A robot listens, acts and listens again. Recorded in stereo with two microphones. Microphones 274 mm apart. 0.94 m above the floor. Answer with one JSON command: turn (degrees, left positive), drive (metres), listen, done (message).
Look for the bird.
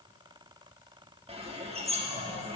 {"turn": -20}
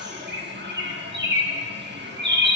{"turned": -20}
{"turn": -140}
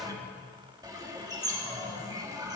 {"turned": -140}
{"turn": -15}
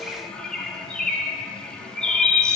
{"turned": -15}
{"done": "Found it: a bird, straight ahead, 1 to 2 m away."}